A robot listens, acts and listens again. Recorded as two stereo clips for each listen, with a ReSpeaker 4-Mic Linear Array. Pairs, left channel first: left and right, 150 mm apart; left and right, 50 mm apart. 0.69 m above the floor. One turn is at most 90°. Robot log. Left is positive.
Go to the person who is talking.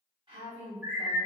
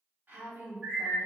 note: The woman speaking: about 35° right or 145° right.
cmd yaw -35
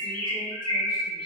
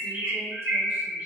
cmd idle
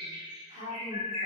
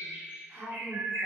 note: So it is at 105° right.
cmd yaw -90
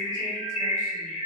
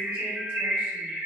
note: Nothing new. It was at 15° right.
cmd yaw -15
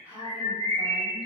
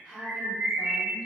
note: The woman speaking is now 15° right.
cmd yaw -15
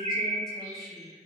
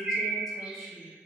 cmd idle
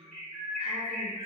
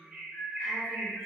cmd idle
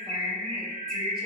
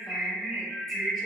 end: I heard a woman speaking from this way, but can't make it out now. I did not reach it.